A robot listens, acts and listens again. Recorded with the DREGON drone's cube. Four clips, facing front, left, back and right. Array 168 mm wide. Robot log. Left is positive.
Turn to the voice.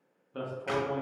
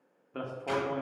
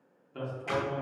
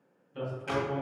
note: The man speaking: 65° left.
cmd yaw +65
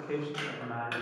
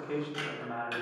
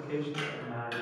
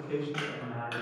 note: The man speaking is now 30° left.
cmd yaw +30
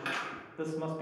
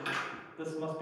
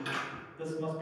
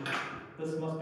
note: The man speaking is now 10° left.
cmd yaw +10
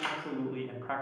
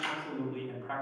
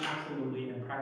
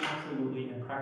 end: Found it: a man speaking, straight ahead, 1 to 2 m away.